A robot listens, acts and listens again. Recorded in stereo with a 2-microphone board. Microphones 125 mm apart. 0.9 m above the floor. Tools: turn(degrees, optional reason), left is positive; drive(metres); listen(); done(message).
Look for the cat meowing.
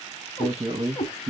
turn(degrees=70, reason="The cat meowing: about 70° left or 110° left.")
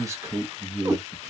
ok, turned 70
turn(degrees=-25, reason="So it is at 25° right.")
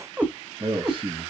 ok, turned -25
turn(degrees=-30, reason="The cat meowing is now 30° right.")
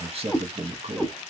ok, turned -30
done("Facing the cat meowing.")